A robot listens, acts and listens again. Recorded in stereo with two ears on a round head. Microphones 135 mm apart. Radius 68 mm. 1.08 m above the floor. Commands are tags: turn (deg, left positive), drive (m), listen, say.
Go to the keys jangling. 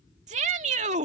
<listen/>
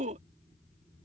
<listen/>
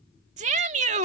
<say>I can't make out keys jangling to turn to.</say>